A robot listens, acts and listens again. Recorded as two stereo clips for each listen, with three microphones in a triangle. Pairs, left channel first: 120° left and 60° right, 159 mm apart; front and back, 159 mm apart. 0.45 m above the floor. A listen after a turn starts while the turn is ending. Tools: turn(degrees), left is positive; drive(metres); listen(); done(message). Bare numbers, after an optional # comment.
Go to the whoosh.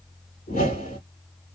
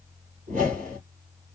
# The whoosh: 145° left.
turn(145)
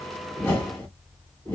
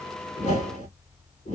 # The whoosh is now 40° left.
turn(40)
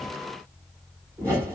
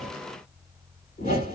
# The whoosh is now 15° left.
turn(15)
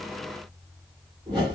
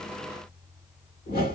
drive(1.0)
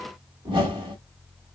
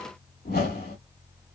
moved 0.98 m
drive(1.0)
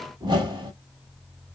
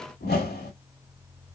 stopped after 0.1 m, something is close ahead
done("I am next to the whoosh.")